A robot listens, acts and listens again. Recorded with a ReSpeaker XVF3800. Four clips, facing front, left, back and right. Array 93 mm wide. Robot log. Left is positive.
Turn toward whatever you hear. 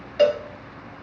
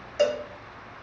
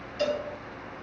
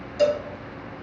note: The cowbell: 25° left.
cmd yaw +25
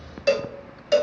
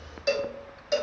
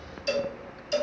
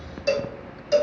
end: Facing the cowbell.